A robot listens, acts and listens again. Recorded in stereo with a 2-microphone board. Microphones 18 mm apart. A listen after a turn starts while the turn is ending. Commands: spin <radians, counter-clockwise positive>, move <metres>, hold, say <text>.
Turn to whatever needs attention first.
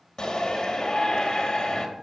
spin 0.70
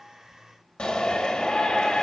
spin 1.75
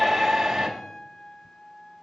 spin -0.35
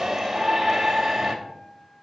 say Facing the shout, 2 to 4 m away.